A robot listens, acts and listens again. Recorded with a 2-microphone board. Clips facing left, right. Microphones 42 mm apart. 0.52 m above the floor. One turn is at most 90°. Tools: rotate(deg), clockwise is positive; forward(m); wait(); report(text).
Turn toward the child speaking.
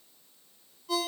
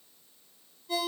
wait()
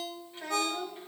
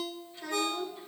rotate(-50)
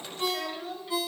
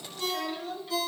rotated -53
rotate(-10)
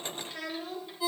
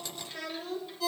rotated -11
rotate(-10)
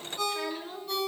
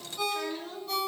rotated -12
rotate(-15)
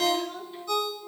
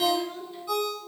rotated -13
wait()
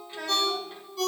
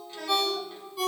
rotate(-25)
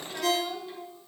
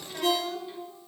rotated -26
report("Found it: a child speaking, straight ahead, 1 to 2 m away.")